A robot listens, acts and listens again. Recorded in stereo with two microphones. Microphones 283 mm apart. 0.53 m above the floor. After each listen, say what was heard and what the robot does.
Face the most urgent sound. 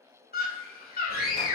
The scream: about 30° left or 150° left. Turn 30° left.
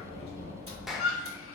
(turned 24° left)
So it is at 120° left. Turn 120° left.
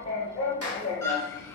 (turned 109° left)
Nothing new. It was at 10° left. Turn 10° left.
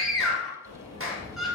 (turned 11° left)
Facing the scream, 1 to 2 m away.